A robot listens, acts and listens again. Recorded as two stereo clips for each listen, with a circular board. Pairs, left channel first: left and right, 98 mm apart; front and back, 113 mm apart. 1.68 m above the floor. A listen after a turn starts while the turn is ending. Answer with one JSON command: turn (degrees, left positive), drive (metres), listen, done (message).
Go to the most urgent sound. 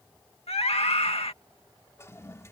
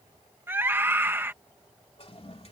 {"turn": 110}
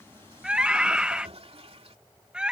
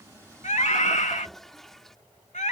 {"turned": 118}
{"turn": -10}
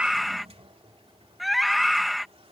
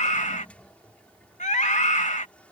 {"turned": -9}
{"drive": 1.0}
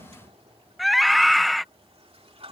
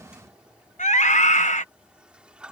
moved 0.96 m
{"drive": 1.0}
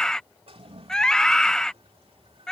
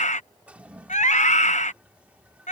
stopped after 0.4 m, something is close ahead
{"done": "Arrived at the scream, straight ahead."}